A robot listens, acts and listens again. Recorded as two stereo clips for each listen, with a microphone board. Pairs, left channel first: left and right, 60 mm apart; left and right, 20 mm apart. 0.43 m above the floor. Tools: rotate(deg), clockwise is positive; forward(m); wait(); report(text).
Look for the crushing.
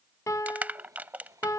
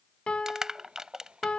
rotate(30)
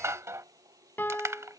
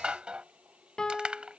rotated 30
rotate(120)
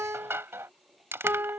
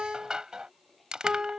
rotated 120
rotate(45)
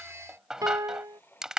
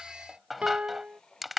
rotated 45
rotate(10)
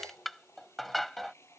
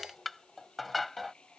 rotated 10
report("Facing the crushing.")